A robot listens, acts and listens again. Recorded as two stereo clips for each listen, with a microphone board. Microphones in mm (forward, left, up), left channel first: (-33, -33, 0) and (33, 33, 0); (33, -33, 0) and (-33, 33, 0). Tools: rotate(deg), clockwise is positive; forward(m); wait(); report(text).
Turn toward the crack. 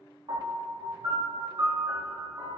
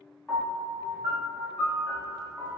wait()
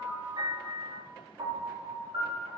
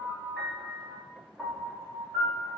wait()
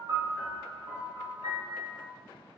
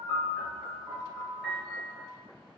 report("I can't make out a crack to turn to.")